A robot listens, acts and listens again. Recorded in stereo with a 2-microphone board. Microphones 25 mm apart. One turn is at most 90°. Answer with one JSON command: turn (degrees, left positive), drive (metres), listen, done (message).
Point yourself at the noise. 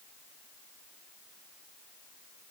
{"listen": true}
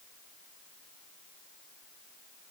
{"listen": true}
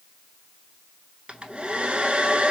{"turn": -45}
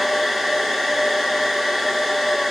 {"done": "Found it: a hair dryer, straight ahead, under 1 m away."}